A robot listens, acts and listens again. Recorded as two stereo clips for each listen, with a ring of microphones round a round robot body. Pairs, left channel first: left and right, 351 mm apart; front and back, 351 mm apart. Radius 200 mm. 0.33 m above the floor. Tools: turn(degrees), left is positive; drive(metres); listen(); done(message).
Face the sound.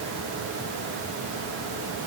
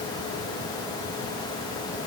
listen()
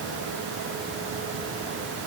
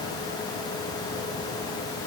listen()
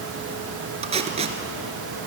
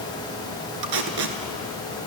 turn(degrees=-165)
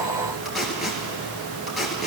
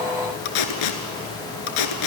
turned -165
done("Facing the tape being pulled, 1 to 2 m away.")